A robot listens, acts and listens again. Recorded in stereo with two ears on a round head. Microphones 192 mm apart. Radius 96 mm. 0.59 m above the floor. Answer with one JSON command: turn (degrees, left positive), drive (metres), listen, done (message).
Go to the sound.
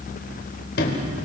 {"turn": 55}
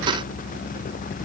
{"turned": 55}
{"listen": true}
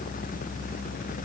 {"listen": true}
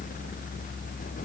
{"done": "I heard a sliding door, but can't make it out now. It was about straight ahead or 70° left. I did not reach it."}